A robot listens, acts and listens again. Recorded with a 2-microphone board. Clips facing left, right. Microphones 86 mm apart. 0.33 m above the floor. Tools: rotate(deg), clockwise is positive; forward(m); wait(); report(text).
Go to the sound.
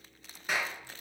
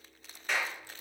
rotate(-30)
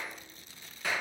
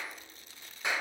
rotate(20)
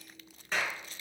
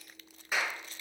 rotate(10)
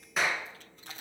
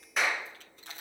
forward(1.0)
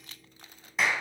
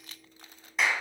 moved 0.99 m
forward(1.0)
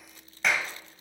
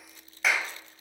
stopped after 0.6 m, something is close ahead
report("Arrived at the clap, straight ahead.")